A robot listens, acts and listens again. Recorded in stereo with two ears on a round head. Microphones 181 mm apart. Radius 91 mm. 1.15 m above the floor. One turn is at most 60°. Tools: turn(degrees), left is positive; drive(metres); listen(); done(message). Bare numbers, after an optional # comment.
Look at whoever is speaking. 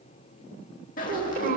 # The child speaking: about 50° right or 130° right.
turn(-50)
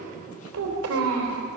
# So it is at 80° right.
turn(-60)
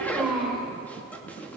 done("Facing the child speaking, 2 to 4 m away.")